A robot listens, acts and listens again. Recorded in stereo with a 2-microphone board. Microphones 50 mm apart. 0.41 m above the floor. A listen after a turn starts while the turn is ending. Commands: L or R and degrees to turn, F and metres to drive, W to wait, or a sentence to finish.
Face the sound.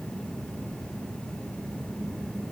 W
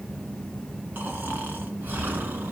R40
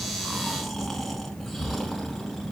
Found it: snoring, straight ahead.